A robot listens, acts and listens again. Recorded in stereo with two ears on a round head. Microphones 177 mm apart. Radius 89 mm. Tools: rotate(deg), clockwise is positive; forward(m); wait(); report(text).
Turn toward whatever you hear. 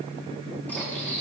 rotate(-30)
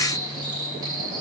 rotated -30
rotate(20)
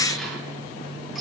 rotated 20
report("Found it: cutlery clinking, straight ahead, over 4 m away.")